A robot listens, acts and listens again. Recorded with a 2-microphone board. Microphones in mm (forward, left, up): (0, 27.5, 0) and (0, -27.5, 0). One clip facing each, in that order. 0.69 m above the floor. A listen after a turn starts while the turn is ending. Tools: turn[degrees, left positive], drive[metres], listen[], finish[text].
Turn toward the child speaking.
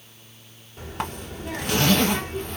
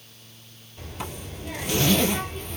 Thought: The child speaking: about 75° left or 105° left.
Action: turn[75]
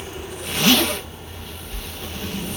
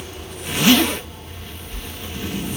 Thought: So it is at 25° left.
Action: turn[25]
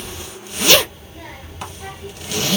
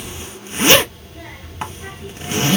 Action: finish[Found it: a child speaking, straight ahead.]